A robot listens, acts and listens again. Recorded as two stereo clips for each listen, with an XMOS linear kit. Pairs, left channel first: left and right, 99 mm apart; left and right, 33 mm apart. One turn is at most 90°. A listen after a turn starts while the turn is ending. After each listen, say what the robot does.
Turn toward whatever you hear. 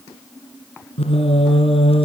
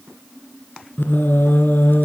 Turn 75° left.
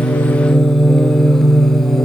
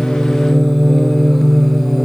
Found it: singing, straight ahead, 2 to 4 m away.